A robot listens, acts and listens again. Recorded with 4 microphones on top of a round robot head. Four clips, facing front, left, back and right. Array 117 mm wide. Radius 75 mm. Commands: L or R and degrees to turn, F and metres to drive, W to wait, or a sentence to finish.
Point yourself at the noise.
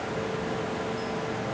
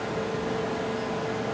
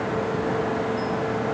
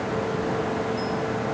W
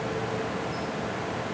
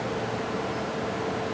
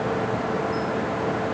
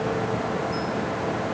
W
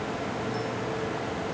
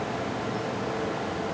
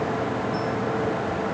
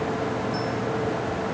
I can't make out anything to turn to.